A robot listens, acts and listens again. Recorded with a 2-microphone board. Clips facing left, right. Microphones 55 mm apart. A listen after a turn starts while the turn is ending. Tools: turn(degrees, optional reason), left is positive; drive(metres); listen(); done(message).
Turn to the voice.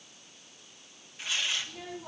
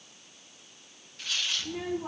turn(degrees=-65, reason="The child speaking: about 65° right or 115° right.")
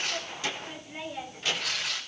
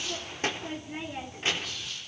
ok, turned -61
turn(degrees=-30, reason="So it is at 30° right.")
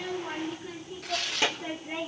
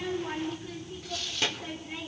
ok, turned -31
turn(degrees=20, reason="The child speaking is now 20° left.")
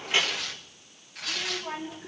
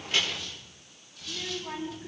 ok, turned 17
turn(degrees=10, reason="The child speaking is now 10° left.")
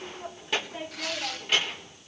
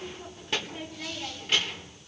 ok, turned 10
done("Found it: a child speaking, straight ahead.")